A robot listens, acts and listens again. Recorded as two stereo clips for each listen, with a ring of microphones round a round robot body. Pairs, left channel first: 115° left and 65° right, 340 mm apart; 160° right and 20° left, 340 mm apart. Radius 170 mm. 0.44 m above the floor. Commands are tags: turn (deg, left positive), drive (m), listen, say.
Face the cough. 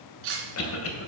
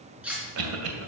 <turn deg="65"/>
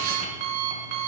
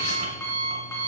<listen/>
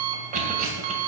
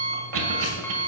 <say>Found it: a cough, straight ahead, 2 to 4 m away.</say>